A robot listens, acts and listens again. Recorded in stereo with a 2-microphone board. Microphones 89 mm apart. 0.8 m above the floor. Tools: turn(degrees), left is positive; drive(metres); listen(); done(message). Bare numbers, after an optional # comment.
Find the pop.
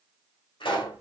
# The pop: about 65° left or 115° left.
turn(65)
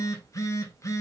listen()
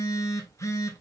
done("I heard a pop, but can't make it out now. It was about straight ahead or 50° left.")